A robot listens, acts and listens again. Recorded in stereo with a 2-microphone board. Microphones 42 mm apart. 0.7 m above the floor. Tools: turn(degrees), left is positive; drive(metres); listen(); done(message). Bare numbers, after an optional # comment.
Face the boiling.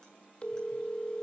listen()
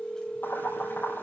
# The boiling: about 60° left or 120° left.
turn(60)
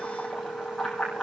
done("Found it: boiling, straight ahead.")